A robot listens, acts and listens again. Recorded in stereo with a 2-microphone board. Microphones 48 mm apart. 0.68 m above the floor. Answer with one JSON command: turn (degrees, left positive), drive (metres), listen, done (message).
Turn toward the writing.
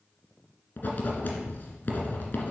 {"turn": 40}
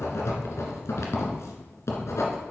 {"turn": 100}
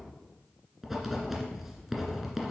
{"done": "Found it: writing, straight ahead, 1 to 2 m away."}